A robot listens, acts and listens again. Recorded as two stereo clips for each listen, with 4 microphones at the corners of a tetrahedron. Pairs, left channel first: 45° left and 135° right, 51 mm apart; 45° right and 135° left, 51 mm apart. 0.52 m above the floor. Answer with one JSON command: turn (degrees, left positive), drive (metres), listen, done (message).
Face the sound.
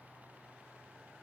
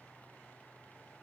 {"listen": true}
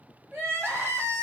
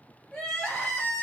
{"turn": -120}
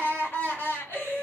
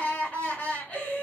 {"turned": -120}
{"turn": 10}
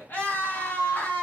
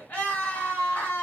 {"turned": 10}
{"done": "Found it: crying, straight ahead, 1 to 2 m away."}